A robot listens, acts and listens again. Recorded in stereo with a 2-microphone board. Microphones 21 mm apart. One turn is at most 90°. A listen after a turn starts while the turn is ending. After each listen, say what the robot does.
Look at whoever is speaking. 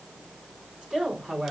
Turn 70° right.
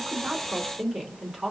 Turn 35° right.
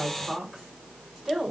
Turn 20° right.
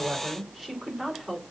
Found it: a woman speaking, straight ahead.